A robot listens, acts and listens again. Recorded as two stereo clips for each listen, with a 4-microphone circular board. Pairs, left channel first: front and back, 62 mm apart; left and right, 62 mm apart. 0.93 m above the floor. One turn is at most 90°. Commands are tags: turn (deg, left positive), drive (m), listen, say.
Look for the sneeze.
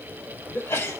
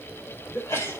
<turn deg="45"/>
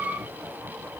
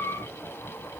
<say>Facing where the sneeze came from. I can't hear it now.</say>